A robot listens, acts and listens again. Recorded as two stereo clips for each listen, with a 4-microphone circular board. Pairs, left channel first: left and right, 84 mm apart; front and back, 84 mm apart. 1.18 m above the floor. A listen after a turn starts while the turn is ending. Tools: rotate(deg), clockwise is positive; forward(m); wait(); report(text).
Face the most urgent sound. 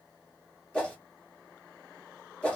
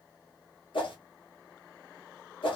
wait()
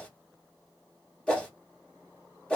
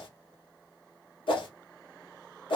wait()
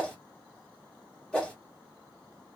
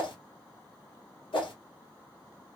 report("I can't make out anything urgent, only a whoosh.")